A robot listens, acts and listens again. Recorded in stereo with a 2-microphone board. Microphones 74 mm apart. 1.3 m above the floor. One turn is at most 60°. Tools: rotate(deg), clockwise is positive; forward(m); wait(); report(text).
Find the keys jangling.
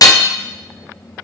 wait()
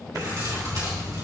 rotate(60)
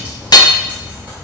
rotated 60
rotate(25)
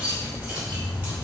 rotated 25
rotate(25)
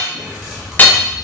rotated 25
report("Facing the keys jangling, 2 to 4 m away.")